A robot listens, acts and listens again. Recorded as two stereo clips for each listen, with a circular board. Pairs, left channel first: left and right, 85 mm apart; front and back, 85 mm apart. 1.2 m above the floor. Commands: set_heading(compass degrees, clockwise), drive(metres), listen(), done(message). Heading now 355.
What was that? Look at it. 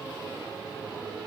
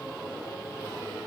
listen()
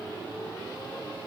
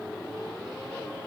listen()
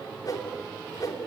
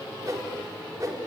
set_heading(220)
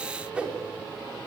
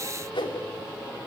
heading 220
set_heading(235)
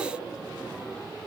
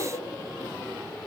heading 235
listen()
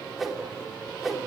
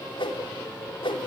done("Found it: a whoosh, straight ahead, 2 to 4 m away.")